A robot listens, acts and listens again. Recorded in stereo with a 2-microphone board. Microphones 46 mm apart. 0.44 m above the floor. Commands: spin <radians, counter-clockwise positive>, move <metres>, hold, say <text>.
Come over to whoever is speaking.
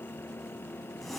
hold
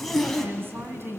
spin -0.87
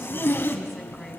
hold
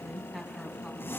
move 1.0
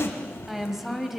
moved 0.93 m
move 1.0
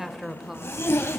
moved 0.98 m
spin -0.17
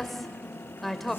move 1.0
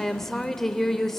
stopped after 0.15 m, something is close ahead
spin 0.17
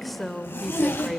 say Arrived at the woman speaking, straight ahead.